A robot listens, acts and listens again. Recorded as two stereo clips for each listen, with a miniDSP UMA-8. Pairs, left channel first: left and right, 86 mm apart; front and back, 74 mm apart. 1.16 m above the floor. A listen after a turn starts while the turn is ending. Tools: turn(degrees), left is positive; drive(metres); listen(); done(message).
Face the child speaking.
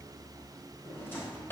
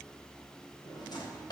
listen()
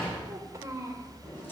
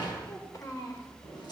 turn(degrees=-40)
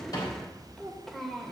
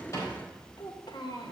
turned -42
done("Found it: a child speaking, straight ahead.")